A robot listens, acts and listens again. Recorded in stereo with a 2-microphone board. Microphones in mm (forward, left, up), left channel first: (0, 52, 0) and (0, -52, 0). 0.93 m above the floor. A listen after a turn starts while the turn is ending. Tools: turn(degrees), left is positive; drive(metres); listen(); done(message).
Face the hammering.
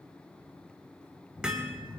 turn(degrees=-30)
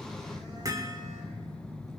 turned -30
turn(degrees=-145)
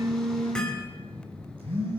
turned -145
listen()
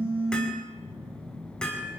turn(degrees=10)
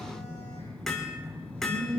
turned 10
done("Facing the hammering, 2 to 4 m away.")